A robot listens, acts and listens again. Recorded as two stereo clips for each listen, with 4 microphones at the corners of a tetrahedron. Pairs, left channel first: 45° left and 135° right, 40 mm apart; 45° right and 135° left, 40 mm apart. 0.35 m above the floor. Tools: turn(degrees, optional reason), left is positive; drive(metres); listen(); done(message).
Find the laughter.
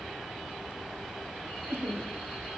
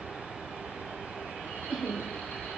turn(degrees=-140, reason="The laughter: 140° right.")
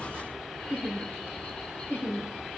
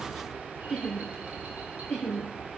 turn(degrees=45, reason="The laughter is now 45° left.")
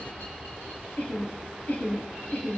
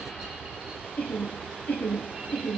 done("Found it: laughter, straight ahead.")